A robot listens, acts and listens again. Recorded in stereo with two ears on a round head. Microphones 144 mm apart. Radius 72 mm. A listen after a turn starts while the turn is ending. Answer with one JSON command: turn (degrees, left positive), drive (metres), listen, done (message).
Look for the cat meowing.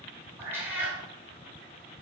{"turn": -30}
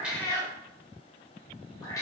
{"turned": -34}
{"turn": 20}
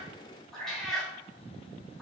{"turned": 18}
{"done": "Facing the cat meowing."}